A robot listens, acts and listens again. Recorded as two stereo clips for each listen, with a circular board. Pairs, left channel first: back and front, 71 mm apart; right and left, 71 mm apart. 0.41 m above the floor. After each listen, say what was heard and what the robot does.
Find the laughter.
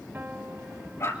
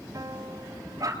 Keep listening.
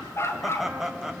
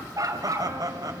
The laughter: 80° left. Turn 80° left.
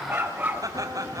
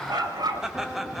Found it: laughter, straight ahead, 2 to 4 m away.